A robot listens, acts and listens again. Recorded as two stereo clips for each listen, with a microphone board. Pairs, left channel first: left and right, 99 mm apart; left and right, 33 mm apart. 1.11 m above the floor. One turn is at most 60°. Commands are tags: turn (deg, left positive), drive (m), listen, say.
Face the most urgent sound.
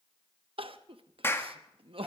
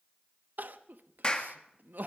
<turn deg="-60"/>
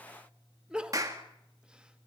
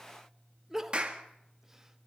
<turn deg="-10"/>
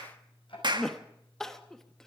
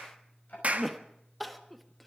<say>Found it: crying, straight ahead.</say>